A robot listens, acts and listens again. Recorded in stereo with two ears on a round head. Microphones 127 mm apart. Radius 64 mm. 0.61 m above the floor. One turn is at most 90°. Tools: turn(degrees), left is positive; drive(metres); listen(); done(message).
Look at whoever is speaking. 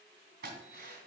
listen()
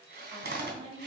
turn(degrees=-45)
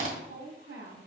turn(degrees=-90)
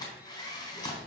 listen()
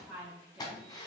turn(degrees=-10)
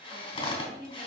done("Facing the woman speaking, 2 to 4 m away.")